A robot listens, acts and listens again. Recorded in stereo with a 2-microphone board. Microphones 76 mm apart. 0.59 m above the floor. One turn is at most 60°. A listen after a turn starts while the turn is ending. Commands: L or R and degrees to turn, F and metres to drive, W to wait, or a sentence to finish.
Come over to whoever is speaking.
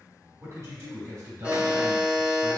R40
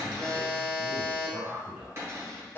R10
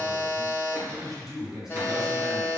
F1.0
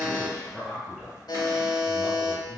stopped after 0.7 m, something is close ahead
Arrived at the man speaking, straight ahead.